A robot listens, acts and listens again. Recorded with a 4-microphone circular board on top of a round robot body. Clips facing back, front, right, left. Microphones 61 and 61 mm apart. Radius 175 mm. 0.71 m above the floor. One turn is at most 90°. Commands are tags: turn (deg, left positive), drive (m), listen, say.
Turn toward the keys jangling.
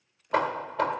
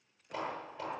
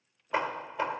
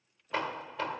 <listen/>
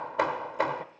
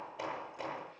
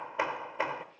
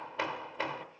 <listen/>
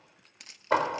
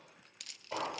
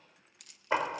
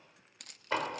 <turn deg="90"/>
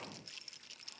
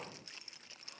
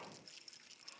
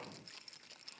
<turn deg="60"/>
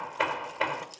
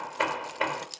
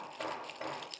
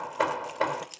<turn deg="10"/>
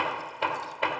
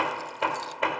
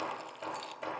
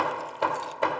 <listen/>
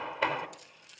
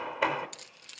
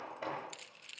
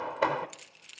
<say>Found it: keys jangling, straight ahead.</say>